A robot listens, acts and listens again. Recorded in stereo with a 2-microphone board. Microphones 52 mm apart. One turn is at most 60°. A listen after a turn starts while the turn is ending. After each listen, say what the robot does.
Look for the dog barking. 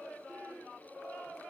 Keep listening.
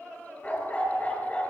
Turn 30° left.
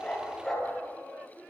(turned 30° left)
Facing the dog barking, over 4 m away.